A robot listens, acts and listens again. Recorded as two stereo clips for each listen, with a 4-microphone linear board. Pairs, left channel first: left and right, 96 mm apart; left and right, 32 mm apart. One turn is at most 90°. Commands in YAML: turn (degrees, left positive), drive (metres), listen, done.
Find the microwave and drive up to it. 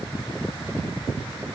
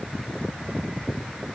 listen: true
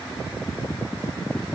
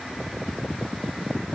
listen: true
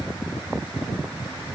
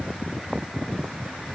done: "I can't make out a microwave."